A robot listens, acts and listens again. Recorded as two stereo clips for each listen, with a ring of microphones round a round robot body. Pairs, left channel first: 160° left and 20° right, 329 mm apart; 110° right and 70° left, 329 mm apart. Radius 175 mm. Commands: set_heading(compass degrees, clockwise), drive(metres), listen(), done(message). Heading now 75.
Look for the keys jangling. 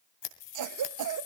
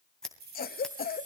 set_heading(300)
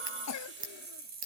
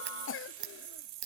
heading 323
set_heading(278)
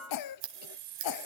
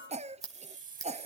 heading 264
done("Found it: keys jangling, straight ahead, 2 to 4 m away.")